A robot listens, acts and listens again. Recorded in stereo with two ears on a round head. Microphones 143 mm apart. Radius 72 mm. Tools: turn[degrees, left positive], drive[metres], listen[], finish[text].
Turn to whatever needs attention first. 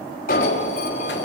Thought: The alarm: about 55° left or 125° left.
Action: turn[55]
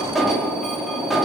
Action: finish[Facing the alarm.]